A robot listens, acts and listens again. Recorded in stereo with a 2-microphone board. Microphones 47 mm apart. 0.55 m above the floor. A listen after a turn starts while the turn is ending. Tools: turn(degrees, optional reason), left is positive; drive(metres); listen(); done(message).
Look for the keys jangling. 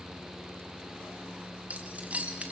turn(degrees=-30, reason="The keys jangling: about 30° right or 150° right.")
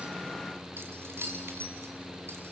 turn(degrees=-120, reason="So it is at 120° right.")
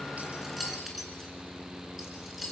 done("Facing the keys jangling.")